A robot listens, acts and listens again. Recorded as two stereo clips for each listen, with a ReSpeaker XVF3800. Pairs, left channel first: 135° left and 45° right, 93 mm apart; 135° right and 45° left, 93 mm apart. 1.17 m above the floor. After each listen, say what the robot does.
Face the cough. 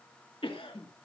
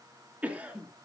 Turn 120° left.
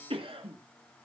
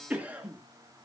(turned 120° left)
Turn 30° right.
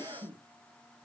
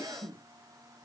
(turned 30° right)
Facing the cough, 2 to 4 m away.